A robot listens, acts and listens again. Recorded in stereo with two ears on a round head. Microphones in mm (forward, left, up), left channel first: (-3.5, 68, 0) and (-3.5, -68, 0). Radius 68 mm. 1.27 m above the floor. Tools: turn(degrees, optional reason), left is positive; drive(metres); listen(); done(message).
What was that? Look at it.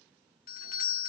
turn(degrees=60, reason="The doorbell: about 60° left or 120° left.")
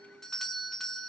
done("Facing the doorbell, 1 to 2 m away.")